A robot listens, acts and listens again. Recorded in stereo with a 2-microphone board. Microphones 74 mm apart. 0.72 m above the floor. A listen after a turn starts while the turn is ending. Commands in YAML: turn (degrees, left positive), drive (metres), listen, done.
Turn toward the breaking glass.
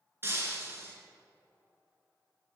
turn: -35
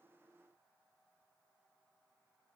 listen: true
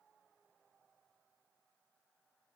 done: "I heard breaking glass, but can't make it out now. It was about straight ahead or 110° right."